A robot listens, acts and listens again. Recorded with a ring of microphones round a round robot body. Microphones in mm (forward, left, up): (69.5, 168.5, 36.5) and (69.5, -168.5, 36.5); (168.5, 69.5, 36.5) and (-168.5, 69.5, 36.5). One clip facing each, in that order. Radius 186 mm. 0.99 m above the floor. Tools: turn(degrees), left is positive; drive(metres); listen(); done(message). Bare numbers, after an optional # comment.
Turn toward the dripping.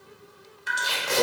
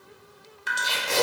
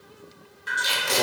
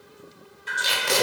# The dripping: 75° right.
turn(-75)
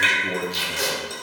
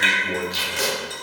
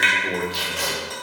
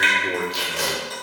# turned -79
done("Facing the dripping, under 1 m away.")